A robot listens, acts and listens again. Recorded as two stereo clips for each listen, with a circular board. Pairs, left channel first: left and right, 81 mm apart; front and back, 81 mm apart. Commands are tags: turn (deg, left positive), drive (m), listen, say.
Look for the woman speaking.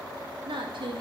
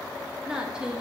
<turn deg="-100"/>
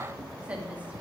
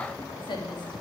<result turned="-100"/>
<turn deg="-15"/>
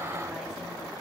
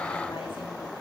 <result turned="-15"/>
<listen/>
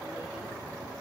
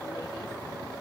<listen/>
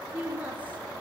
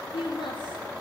<turn deg="-20"/>
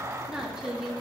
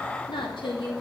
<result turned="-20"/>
<turn deg="-10"/>
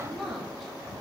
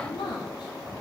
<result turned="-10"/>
<say>Found it: a woman speaking, straight ahead.</say>